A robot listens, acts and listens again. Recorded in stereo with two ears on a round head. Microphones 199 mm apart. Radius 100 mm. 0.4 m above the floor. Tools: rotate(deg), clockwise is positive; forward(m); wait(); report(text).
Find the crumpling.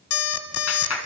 wait()
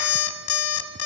wait()
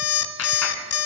report("I can't make out crumpling to turn to.")